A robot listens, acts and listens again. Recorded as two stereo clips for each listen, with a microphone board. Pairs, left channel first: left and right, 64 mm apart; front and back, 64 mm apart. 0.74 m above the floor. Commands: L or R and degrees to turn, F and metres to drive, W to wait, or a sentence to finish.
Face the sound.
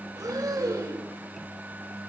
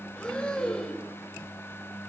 R70
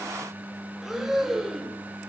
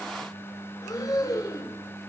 Found it: breathing, straight ahead, under 1 m away.